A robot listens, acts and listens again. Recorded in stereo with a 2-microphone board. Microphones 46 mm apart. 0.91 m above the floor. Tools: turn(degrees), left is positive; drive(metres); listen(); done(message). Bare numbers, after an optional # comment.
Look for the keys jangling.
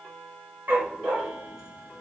listen()
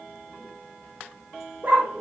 listen()
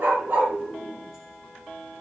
done("I can't make out keys jangling, only a dog barking.")